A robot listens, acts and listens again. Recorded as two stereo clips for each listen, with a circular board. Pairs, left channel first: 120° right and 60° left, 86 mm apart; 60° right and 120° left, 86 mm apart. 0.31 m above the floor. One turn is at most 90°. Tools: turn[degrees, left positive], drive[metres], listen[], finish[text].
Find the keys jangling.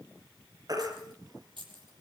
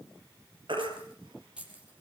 Thought: The keys jangling: 45° left.
Action: turn[45]
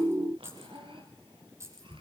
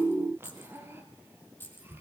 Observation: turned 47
Action: finish[Facing the keys jangling, over 4 m away.]